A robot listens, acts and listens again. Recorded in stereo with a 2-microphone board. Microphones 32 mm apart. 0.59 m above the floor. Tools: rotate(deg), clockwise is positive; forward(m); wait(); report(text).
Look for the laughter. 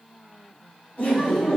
rotate(-60)
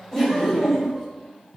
rotate(-15)
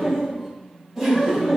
rotate(10)
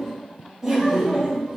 report("Facing the laughter, 2 to 4 m away.")